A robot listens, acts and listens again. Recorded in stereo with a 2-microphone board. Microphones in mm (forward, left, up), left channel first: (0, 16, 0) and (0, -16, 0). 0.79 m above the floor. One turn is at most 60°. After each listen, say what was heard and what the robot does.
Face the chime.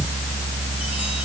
Keep listening.
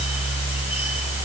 Keep listening.
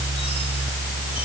I can't make out a chime to turn to.